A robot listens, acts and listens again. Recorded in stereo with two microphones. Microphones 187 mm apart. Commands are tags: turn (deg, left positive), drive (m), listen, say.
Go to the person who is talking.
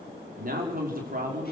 <turn deg="-50"/>
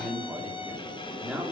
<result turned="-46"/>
<drive m="1.0"/>
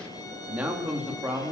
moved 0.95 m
<drive m="1.0"/>
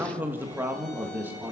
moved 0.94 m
<turn deg="-10"/>
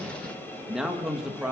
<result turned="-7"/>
<drive m="1.0"/>
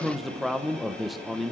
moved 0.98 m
<drive m="1.0"/>
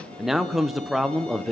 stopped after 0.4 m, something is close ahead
<say>I am next to the man speaking.</say>